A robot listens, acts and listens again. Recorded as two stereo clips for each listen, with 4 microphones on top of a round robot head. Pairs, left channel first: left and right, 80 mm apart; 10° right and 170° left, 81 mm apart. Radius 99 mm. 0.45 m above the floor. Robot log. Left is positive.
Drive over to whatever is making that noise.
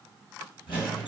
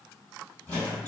note: The squeak: 60° left.
cmd yaw +60
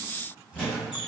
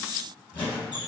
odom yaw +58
cmd fwd 1.0
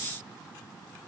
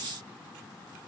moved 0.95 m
cmd idle
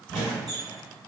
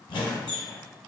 cmd fwd 1.0
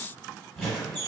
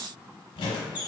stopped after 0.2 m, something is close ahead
end: Arrived at the squeak, straight ahead.